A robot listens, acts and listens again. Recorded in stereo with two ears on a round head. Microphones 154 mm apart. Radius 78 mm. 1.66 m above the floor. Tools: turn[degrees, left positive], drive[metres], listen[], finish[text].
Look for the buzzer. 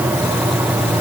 Action: listen[]
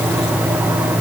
Action: listen[]
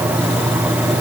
Action: finish[I can't make out a buzzer to turn to.]